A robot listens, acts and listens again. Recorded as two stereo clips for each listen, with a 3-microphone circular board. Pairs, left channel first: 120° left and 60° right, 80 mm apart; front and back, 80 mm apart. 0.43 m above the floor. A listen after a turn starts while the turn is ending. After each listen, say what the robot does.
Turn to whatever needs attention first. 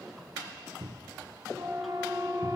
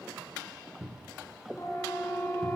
Turn 45° right.
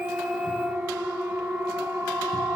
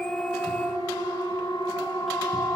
Turn 10° left.
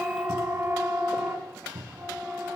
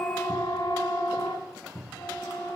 Facing the siren, over 4 m away.